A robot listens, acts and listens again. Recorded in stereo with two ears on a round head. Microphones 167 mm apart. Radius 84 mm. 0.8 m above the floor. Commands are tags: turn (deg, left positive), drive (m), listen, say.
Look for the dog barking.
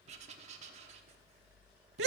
<listen/>
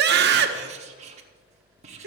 <listen/>
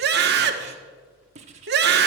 <say>I can't make out a dog barking to turn to.</say>